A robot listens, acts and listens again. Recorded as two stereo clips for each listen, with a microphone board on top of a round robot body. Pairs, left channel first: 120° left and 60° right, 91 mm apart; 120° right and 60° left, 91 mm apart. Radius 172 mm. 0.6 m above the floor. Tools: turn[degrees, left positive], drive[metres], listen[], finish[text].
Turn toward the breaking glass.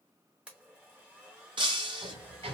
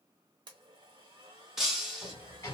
Thought: The breaking glass: 25° right.
Action: turn[-25]
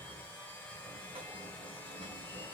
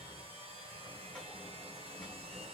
Action: finish[Facing where the breaking glass came from. I can't hear it now.]